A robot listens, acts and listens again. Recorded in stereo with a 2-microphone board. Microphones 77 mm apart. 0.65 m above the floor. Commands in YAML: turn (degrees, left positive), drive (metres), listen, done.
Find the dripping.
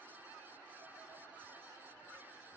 listen: true
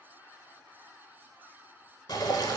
turn: 55
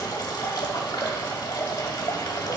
turn: 65
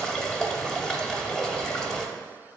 turn: 10
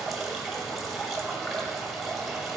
done: "Found it: dripping, straight ahead, under 1 m away."